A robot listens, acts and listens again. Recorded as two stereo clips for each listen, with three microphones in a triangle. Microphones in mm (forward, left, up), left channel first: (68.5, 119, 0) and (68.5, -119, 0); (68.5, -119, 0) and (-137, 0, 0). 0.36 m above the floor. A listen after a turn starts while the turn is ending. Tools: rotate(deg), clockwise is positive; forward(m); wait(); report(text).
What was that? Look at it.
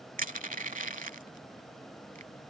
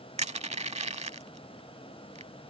rotate(145)
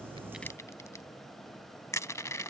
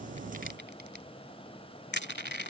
rotate(-10)
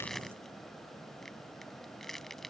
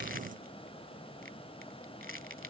report("Facing the crushing.")